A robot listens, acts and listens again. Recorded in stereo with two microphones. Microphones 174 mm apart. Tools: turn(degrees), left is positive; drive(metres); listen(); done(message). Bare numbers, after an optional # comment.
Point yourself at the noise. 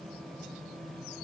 listen()
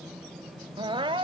# The crying: about 30° right or 150° right.
turn(-30)
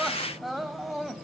done("Found it: crying, straight ahead, under 1 m away.")